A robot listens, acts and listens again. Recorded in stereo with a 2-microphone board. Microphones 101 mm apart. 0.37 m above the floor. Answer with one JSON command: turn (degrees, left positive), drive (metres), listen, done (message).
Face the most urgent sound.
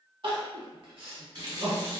{"turn": -55}
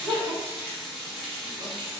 {"turn": -70}
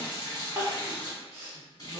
{"turn": -30}
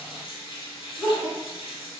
{"done": "Found it: crying, straight ahead."}